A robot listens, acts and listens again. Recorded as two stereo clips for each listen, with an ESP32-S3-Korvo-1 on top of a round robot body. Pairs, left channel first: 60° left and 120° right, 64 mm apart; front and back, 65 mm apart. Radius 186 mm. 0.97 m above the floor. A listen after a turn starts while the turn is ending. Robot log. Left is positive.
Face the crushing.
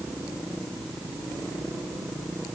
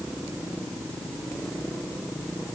cmd idle
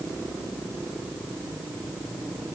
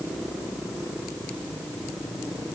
cmd idle
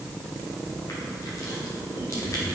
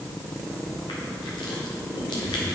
note: The crushing: 15° left.
cmd yaw +15
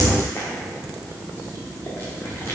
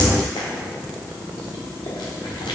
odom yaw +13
end: Facing the crushing, 1 to 2 m away.